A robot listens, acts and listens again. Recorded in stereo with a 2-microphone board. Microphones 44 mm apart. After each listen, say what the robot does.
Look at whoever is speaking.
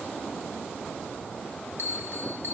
Keep listening.
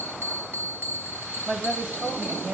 Turn 40° right.
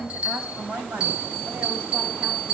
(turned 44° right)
Turn 100° right.
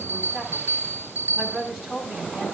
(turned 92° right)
Facing the woman speaking, over 4 m away.